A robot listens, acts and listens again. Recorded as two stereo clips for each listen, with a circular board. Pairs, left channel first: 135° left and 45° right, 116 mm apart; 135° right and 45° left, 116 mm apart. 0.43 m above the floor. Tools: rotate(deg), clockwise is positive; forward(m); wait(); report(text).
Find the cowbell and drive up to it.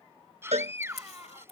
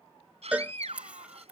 rotate(30)
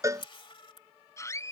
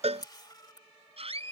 rotate(-20)
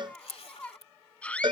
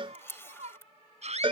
forward(1.0)
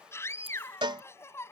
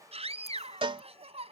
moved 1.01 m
forward(1.0)
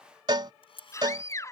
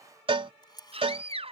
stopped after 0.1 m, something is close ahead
report("Arrived at the cowbell, straight ahead.")